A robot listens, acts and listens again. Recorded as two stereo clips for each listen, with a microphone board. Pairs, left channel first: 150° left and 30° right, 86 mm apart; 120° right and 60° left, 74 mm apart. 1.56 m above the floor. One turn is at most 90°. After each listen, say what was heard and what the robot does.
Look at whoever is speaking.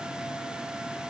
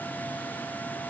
Keep listening.
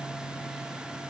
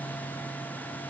Keep listening.
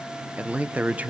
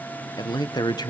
The man speaking: 100° right. Turn 90° right.
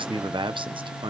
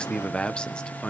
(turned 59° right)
The man speaking is now 40° right. Turn 40° right.
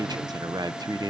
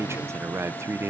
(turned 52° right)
The man speaking is now 10° left. Turn 10° left.
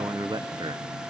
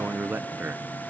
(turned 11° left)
Facing the man speaking.